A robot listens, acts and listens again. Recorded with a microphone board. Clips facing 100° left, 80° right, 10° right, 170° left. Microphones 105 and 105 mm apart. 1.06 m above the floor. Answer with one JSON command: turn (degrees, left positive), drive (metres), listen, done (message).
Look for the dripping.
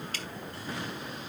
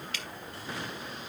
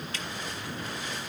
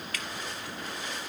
{"turn": 50}
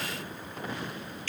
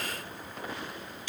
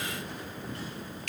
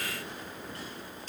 {"done": "Facing the dripping."}